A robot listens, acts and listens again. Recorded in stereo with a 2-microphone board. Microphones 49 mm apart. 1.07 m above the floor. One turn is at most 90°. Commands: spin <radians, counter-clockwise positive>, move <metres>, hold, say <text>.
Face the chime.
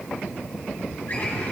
hold
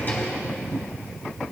hold
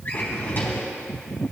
say I can't make out a chime to turn to.